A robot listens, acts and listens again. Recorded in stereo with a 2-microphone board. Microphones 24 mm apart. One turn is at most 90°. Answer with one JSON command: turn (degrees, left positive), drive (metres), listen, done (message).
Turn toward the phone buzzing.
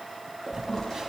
{"turn": -25}
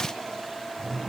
{"listen": true}
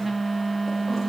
{"done": "Found it: a phone buzzing, straight ahead, 1 to 2 m away."}